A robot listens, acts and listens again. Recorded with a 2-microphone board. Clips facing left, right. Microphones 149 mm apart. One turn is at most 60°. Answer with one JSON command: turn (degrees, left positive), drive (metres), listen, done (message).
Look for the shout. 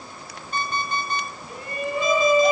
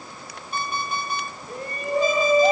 {"turn": -40}
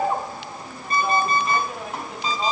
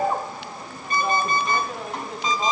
{"done": "Facing the shout."}